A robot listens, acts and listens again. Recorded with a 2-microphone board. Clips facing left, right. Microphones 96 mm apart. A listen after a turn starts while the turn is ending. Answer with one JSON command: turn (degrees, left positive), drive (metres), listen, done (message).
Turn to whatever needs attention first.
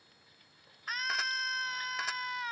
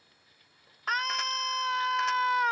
{"turn": -70}
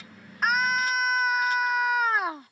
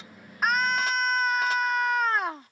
{"done": "Facing the scream."}